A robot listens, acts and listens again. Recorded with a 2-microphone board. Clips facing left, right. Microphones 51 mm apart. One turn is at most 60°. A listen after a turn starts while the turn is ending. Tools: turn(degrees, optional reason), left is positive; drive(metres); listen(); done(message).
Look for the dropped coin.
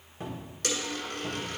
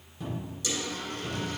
turn(degrees=60, reason="The dropped coin: about 70° left or 110° left.")
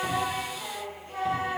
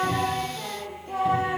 listen()
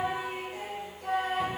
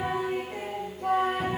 done("I heard a dropped coin, but can't make it out now. It was about 10° left or 50° left.")